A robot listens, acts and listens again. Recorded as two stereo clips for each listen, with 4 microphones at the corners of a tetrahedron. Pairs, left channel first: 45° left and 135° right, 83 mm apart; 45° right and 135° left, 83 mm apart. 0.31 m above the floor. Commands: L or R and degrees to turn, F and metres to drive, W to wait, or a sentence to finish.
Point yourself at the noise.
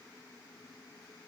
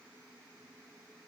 W
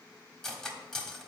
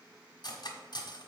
R40
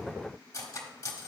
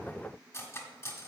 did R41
Facing the cutlery clinking, 1 to 2 m away.